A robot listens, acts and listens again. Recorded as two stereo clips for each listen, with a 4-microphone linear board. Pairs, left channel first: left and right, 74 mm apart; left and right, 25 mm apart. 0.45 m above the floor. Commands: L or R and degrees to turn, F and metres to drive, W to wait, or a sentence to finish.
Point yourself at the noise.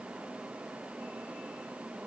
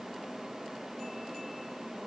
W
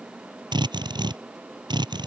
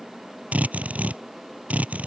R90
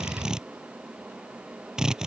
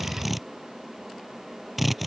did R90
R10
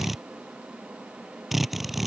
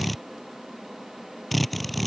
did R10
Found it: a drill, straight ahead.